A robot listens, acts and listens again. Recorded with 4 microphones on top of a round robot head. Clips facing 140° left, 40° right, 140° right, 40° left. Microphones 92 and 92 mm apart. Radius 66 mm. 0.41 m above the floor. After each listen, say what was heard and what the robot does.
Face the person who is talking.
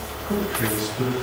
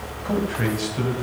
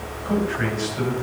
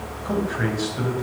The man speaking: 35° right. Turn 35° right.
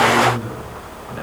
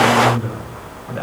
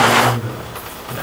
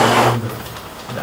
Found it: a man speaking, straight ahead.